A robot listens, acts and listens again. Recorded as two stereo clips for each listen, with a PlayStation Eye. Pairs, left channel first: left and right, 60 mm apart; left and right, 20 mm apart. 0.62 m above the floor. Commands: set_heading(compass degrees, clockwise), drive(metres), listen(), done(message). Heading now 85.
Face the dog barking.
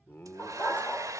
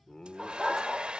set_heading(55)
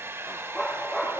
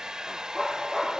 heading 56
done("Found it: a dog barking, straight ahead, over 4 m away.")